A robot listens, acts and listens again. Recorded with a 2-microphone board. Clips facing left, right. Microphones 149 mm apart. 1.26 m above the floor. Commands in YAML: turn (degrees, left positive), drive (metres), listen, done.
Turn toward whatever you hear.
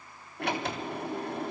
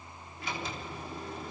turn: 70
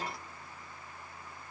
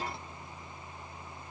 listen: true
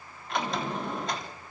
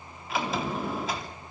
done: "Facing the sliding door, 2 to 4 m away."